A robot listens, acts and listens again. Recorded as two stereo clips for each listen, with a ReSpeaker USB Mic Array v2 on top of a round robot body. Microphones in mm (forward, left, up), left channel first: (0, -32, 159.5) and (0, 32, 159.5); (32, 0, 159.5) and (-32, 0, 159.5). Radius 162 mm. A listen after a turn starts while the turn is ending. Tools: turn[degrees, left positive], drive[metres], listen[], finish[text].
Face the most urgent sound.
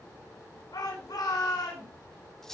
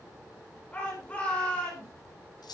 Thought: The shout: 70° right.
Action: turn[-70]
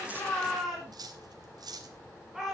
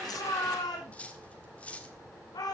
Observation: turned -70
Action: finish[Found it: a shout, straight ahead.]